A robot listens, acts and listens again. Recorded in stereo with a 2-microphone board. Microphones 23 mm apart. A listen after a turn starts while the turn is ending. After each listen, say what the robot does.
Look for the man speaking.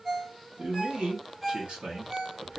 Turn 65° right.
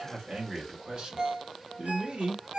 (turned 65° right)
Turn 55° right.
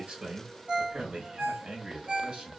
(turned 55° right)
Turn 55° right.
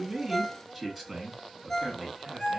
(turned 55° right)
Turn 10° left.
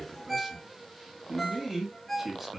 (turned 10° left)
Found it: a man speaking, straight ahead, 1 to 2 m away.